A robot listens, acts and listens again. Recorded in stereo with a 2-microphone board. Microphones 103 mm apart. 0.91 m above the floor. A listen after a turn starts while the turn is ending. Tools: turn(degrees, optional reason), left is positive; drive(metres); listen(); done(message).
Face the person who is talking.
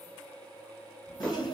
turn(degrees=90)
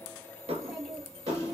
done("Facing the child speaking.")